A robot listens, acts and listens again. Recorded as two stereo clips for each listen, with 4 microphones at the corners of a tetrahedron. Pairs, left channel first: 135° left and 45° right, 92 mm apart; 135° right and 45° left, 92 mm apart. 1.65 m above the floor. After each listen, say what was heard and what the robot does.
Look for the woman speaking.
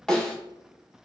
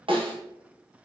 Keep listening.
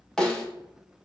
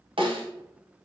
Keep listening.
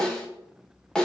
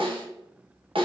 I can't make out a woman speaking to turn to.